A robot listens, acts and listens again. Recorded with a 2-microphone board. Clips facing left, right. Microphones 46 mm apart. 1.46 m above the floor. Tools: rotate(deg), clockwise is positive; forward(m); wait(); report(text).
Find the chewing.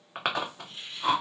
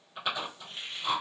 rotate(-65)
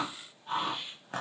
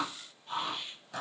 rotate(-45)
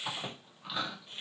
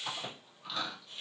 rotate(-15)
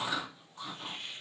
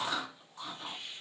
report("Facing the chewing.")